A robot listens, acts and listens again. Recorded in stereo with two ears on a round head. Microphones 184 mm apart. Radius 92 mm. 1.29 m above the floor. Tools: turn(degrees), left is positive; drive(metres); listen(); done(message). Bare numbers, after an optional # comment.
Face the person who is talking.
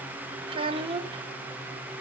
# The child speaking: about 25° right or 155° right.
turn(-25)
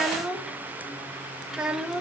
done("Found it: a child speaking, straight ahead, 1 to 2 m away.")